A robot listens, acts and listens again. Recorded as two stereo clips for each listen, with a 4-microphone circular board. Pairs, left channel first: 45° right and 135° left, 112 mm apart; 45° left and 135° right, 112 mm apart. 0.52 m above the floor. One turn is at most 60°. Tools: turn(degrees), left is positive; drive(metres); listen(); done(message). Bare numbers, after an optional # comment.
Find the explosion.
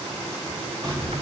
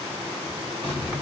# The explosion: 80° left.
turn(60)
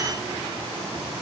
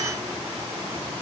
# Nothing new. It was at 20° left.
turn(20)
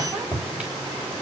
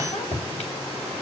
done("Facing where the explosion came from. I can't hear it now.")